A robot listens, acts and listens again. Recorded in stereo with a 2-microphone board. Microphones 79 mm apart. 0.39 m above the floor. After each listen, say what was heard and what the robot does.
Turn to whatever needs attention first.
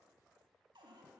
Keep listening.
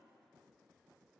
Keep listening.
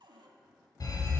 The alarm: about 50° left or 130° left. Turn 50° left.
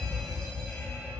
So it is at 10° left. Turn 10° left.
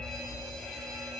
Facing the alarm.